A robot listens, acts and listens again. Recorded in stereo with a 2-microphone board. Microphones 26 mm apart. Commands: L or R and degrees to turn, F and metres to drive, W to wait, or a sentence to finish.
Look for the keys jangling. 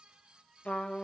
W
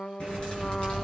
L40
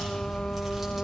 Found it: keys jangling, straight ahead, over 4 m away.